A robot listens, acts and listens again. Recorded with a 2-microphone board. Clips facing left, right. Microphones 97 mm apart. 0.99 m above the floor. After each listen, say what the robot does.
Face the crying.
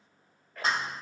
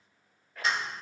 Keep listening.
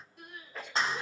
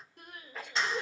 Turn 60° right.
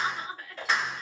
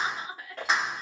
Turn 10° right.
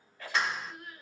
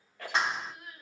Found it: crying, straight ahead.